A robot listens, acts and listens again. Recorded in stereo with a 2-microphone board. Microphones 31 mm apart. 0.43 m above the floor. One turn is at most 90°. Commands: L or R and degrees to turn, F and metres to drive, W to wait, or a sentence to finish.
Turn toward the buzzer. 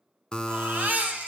L25
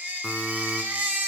W
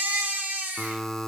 Found it: a buzzer, straight ahead.